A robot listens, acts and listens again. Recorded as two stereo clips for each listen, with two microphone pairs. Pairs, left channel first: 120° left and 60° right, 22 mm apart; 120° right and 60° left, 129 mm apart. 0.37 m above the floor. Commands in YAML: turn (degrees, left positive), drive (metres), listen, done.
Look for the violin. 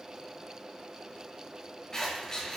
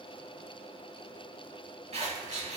listen: true
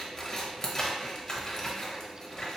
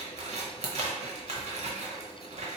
listen: true
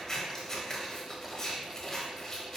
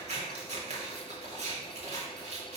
done: "I can't make out a violin to turn to."